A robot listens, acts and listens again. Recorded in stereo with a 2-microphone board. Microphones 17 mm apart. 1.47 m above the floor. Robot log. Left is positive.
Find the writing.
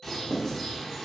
note: The writing: about 35° left or 145° left.
cmd yaw +35
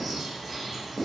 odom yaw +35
cmd idle
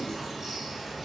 cmd idle
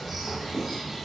note: So it is at 110° left.
cmd yaw +110
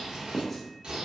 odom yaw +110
note: The writing is now 10° left.
cmd yaw +10
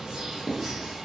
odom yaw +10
end: Found it: writing, straight ahead.